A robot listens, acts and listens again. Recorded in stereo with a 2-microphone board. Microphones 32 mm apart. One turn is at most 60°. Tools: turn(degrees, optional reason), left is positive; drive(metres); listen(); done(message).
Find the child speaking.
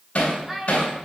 turn(degrees=-15, reason="The child speaking: about 15° right or 165° right.")
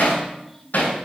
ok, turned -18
listen()
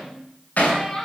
turn(degrees=15, reason="So it is at 15° left.")
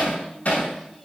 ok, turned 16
listen()
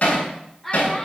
turn(degrees=10, reason="The child speaking is now 10° left.")
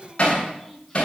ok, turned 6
listen()
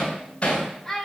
turn(degrees=10, reason="The child speaking is now 10° left.")
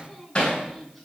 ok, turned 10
listen()
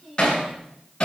done("Found it: a child speaking, straight ahead.")